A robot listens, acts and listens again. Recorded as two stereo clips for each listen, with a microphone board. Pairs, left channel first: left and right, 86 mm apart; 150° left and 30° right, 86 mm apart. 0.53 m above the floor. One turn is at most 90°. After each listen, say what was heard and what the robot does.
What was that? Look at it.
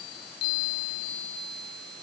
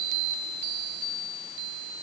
Keep listening.
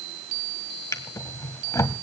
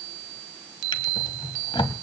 The drawer: 140° left. Turn 90° left.
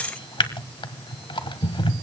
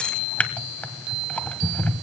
The drawer is now 80° left. Turn 80° left.
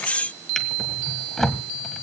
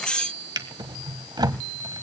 Found it: a drawer, straight ahead.